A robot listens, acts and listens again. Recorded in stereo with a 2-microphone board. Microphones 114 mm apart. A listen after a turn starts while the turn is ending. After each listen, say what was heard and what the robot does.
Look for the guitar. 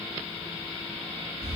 Keep listening.
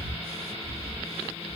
Keep listening.
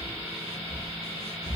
I can't make out a guitar to turn to.